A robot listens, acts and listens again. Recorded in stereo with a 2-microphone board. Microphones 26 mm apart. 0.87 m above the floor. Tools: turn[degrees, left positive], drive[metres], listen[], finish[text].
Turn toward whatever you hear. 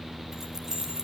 Thought: The keys jangling: about 25° right or 155° right.
Action: turn[-25]
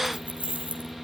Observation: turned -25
Thought: So it is at 115° right.
Action: turn[-115]
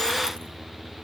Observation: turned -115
Action: listen[]
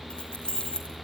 Thought: The keys jangling is now 40° left.
Action: turn[40]
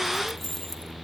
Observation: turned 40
Thought: The keys jangling is now 15° left.
Action: turn[15]
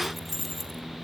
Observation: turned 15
Action: finish[Found it: keys jangling, straight ahead.]